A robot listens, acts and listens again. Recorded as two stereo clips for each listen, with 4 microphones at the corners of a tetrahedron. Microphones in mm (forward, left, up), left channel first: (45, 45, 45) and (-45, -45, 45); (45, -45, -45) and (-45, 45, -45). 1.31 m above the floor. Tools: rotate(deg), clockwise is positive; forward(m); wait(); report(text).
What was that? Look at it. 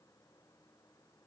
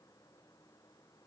wait()
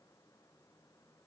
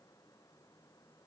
wait()
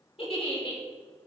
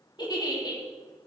report("Found it: a giggle, straight ahead, 2 to 4 m away.")